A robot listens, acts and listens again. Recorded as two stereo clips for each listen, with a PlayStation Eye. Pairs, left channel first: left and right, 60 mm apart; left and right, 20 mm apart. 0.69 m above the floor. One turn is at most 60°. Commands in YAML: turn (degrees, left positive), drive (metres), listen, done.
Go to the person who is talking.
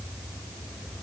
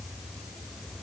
listen: true
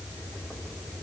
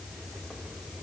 listen: true
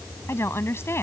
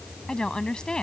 turn: 45
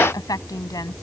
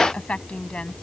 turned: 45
turn: 60
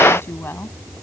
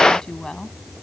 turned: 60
turn: 35
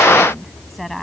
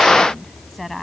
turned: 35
drive: 1.0
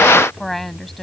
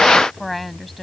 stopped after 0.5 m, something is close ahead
done: "Blocked. The woman speaking is further on, straight ahead."